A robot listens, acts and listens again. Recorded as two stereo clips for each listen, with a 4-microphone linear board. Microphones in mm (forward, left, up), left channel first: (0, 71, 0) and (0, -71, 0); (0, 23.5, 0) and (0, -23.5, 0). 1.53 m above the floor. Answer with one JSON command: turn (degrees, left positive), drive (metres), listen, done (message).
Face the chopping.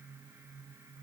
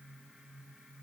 {"listen": true}
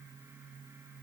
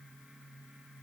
{"listen": true}
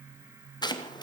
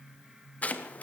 {"turn": 30}
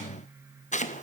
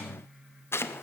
{"turn": 120}
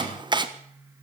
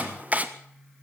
{"turn": -30}
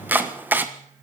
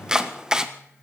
{"turn": -15}
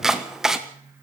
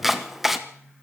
{"done": "Facing the chopping."}